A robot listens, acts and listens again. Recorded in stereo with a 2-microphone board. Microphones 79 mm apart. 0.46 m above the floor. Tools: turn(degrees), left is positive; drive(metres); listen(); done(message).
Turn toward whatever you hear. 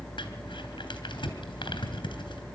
turn(degrees=90)
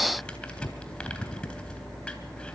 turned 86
turn(degrees=10)
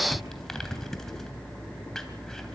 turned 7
done("Found it: crumpling, straight ahead.")